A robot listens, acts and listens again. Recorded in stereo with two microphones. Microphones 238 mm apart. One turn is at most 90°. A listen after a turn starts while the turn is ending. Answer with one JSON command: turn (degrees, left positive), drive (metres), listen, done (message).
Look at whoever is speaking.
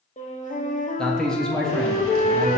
{"turn": 30}
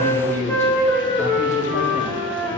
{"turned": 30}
{"turn": 90}
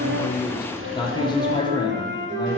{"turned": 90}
{"turn": 20}
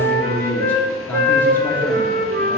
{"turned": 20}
{"turn": 10}
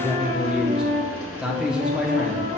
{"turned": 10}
{"done": "Found it: a man speaking, straight ahead."}